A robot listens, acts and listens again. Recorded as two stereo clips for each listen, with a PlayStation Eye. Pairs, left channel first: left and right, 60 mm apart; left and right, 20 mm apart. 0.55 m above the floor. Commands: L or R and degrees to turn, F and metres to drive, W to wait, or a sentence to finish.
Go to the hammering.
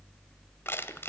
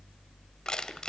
W
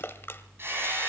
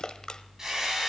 R40
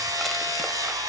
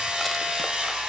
R100
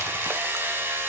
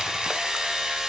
R35
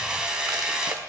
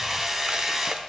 R10
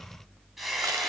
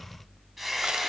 F1.0
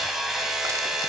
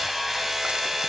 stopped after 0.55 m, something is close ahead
Blocked. The hammering is further on, straight ahead.